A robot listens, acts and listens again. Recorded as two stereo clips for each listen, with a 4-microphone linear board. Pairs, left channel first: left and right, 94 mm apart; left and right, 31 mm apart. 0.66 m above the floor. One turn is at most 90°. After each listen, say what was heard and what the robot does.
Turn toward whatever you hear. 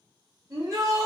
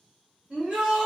The shout: about 40° right or 140° right. Turn 40° right.
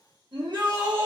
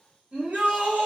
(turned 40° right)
So it is at 90° right. Turn 90° right.
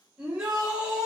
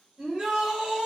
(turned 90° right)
The shout is now 15° right. Turn 15° right.
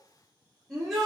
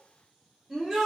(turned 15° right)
Facing the shout.